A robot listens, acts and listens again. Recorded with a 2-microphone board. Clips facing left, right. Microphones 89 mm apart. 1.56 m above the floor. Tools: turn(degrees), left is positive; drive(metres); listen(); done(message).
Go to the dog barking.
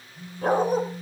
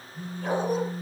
turn(degrees=55)
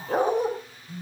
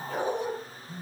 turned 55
turn(degrees=65)
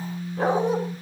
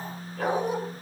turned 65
turn(degrees=35)
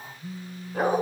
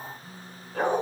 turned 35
turn(degrees=10)
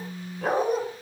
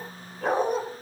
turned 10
drive(metres=1.0)
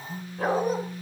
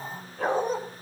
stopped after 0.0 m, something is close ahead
done("Something is in my way. I am facing the dog barking but have not reached it.")